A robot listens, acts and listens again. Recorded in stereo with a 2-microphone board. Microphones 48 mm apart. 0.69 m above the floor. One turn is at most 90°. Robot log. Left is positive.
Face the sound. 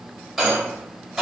cmd yaw -30
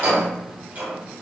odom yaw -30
note: So it is at 145° right.
cmd yaw -90
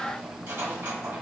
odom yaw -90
note: Nothing new. It was at 55° right.
cmd yaw -55
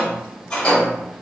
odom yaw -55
note: The rattle is now 25° left.
cmd yaw +25
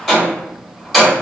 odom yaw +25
end: Facing the rattle, 1 to 2 m away.